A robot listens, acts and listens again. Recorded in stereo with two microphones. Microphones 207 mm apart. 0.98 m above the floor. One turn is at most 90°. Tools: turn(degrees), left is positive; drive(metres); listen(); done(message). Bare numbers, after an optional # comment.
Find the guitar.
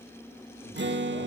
# The guitar: about 60° right or 120° right.
turn(-60)
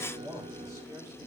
# So it is at 30° right.
turn(-30)
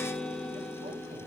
done("Found it: a guitar, straight ahead, under 1 m away.")